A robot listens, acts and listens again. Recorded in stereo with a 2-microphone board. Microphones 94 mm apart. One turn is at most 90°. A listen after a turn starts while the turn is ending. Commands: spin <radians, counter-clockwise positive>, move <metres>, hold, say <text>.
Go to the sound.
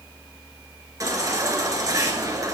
spin -0.61
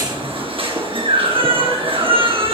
spin -1.57
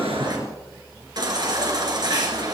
spin -0.87
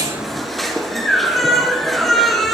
move 1.0
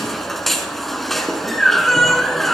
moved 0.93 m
move 1.0
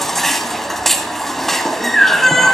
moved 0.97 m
move 1.0
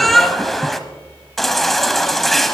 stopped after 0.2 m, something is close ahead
say I am next to the baby crying.